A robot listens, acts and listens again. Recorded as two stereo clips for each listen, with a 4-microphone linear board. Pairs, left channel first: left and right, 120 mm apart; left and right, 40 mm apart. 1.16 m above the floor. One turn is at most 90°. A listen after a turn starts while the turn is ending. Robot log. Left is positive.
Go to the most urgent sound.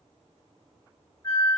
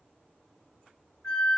cmd idle
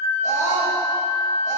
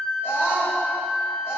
cmd yaw +90
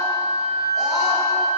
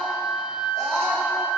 cmd idle
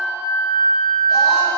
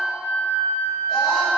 cmd idle
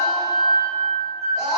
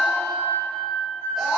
cmd fwd 1.0
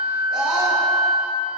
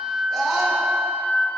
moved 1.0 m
cmd fwd 1.0
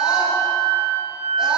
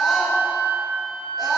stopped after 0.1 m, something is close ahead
cmd idle
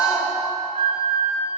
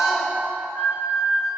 end: I am next to the scream.